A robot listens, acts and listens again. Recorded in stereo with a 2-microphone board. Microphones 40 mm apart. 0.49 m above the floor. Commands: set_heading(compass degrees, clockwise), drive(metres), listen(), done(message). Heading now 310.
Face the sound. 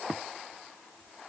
listen()
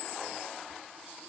listen()
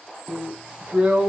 set_heading(350)
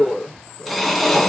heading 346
done("Found it: a drill, straight ahead, 2 to 4 m away.")